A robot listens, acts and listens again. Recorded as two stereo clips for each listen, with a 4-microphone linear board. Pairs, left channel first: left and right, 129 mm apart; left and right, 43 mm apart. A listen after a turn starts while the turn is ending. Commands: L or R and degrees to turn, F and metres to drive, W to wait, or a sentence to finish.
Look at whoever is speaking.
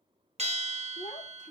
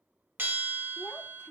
L75
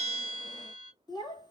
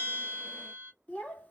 L30
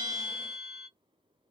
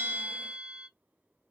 W
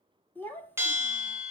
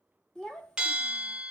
L15
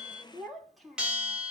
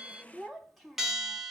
Found it: a child speaking, straight ahead.